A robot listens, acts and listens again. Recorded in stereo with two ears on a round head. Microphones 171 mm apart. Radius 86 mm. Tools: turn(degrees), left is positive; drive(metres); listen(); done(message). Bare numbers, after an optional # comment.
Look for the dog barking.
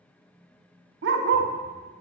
# The dog barking: about 60° right or 120° right.
turn(-60)
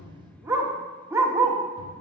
# So it is at 15° right.
turn(-15)
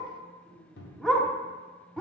done("Found it: a dog barking, straight ahead, 1 to 2 m away.")